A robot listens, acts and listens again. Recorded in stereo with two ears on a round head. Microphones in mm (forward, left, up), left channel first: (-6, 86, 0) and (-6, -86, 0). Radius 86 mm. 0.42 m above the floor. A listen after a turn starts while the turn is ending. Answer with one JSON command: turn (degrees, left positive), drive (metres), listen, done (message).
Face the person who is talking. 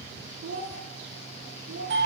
{"turn": -45}
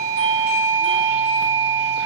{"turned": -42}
{"listen": true}
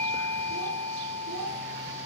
{"listen": true}
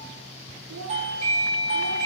{"done": "I heard a child speaking, but can't make it out now. It was about 5° right or 95° right."}